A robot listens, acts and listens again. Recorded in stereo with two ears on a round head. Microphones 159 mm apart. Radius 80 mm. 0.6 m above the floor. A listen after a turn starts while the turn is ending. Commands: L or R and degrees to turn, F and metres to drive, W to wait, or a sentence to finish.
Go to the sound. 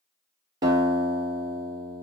R20
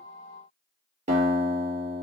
R140
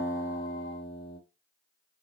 L30
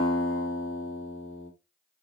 F1.0
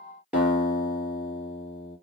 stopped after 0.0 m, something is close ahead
Something is in my way. I am facing the guitar but have not reached it.